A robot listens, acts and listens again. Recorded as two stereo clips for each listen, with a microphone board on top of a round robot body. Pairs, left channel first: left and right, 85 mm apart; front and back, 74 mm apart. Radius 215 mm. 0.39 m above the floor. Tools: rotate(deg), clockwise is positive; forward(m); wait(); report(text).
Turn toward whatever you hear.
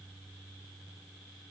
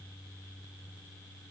wait()
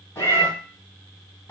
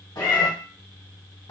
rotate(-30)
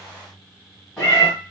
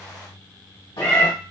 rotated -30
report("Facing the cat meowing, 1 to 2 m away.")